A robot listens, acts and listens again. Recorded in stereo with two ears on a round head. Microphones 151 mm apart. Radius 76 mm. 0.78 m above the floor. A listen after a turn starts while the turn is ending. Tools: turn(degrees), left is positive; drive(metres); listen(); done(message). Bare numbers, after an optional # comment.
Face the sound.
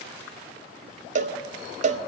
# The cowbell: about 45° right or 135° right.
turn(-45)
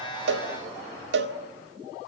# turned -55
# So it is at 80° right.
turn(-80)
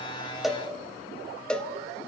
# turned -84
done("Facing the cowbell.")